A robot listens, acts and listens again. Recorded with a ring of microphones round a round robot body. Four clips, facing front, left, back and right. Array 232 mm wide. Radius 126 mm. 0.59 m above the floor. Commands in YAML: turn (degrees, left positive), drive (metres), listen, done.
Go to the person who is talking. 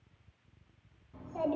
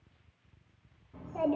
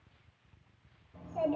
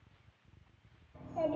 turn: 55
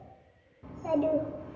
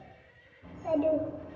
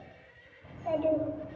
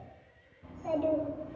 drive: 1.0
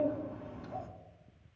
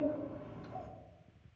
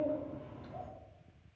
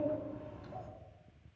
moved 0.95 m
drive: 1.0
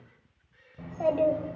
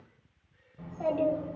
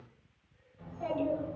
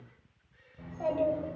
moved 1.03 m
drive: 1.0
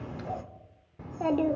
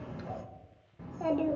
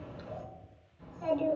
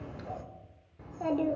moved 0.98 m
drive: 1.0
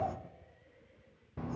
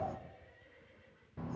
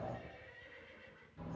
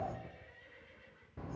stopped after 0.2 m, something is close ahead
done: "I am next to the child speaking."